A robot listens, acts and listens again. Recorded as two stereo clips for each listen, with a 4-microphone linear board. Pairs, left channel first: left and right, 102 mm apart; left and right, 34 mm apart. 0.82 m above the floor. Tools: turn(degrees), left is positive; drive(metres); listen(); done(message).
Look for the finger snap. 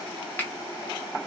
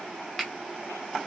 turn(degrees=20)
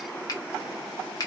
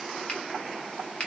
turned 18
turn(degrees=140)
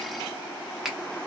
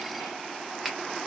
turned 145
done("Facing the finger snap, under 1 m away.")